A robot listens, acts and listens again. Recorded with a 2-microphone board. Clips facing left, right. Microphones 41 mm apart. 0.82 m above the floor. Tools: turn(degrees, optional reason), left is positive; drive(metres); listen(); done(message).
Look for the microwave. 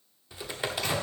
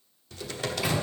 turn(degrees=-30)
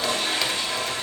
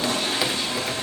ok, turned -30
listen()
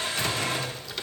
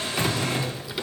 listen()
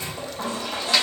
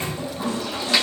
turn(degrees=-140, reason="So it is at 140° right.")
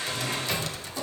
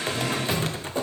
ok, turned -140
done("Facing the microwave.")